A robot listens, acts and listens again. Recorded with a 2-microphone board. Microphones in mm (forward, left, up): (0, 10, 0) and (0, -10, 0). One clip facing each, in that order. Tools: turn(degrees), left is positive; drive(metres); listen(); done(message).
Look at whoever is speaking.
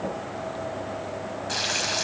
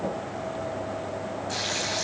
listen()
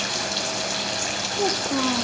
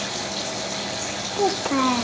turn(degrees=-55)
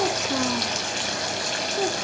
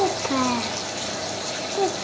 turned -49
turn(degrees=-75)
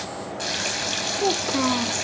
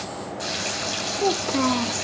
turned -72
done("Facing the child speaking, under 1 m away.")